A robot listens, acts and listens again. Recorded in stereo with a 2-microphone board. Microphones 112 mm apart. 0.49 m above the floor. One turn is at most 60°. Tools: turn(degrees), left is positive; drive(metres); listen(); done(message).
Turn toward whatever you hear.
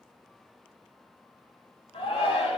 turn(degrees=60)
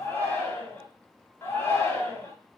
turn(degrees=30)
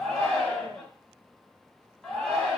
turn(degrees=10)
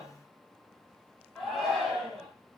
done("Found it: a shout, straight ahead, 1 to 2 m away.")